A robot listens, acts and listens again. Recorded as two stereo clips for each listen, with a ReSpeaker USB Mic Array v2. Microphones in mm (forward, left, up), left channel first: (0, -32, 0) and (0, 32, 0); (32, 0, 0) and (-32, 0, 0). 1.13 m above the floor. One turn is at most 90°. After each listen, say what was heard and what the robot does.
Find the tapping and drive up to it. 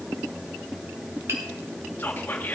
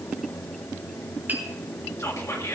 Keep listening.
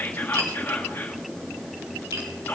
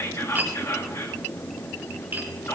The tapping: 125° left. Turn 90° left.
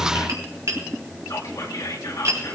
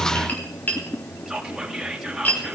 The tapping is now 60° left. Turn 60° left.
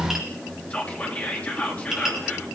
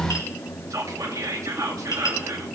Drive 1.0 m forward.
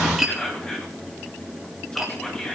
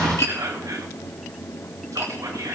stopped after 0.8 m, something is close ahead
Blocked. The tapping is further on, straight ahead.